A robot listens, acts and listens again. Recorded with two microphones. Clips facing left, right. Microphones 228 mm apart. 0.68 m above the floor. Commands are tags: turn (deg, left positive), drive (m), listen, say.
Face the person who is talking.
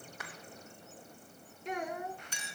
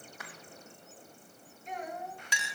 <turn deg="75"/>
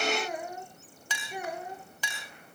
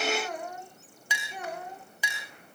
<turn deg="10"/>
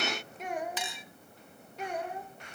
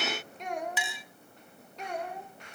<say>Facing the child speaking, 1 to 2 m away.</say>